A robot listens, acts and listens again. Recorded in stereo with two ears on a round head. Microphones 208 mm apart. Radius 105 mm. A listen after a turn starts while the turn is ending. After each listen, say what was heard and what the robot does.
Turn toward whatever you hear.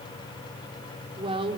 The woman speaking: about 25° right or 155° right. Turn 25° right.
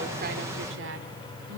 So it is at 120° right. Turn 120° right.
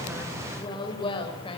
The woman speaking is now 25° left. Turn 25° left.
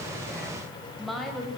Found it: a woman speaking, straight ahead, over 4 m away.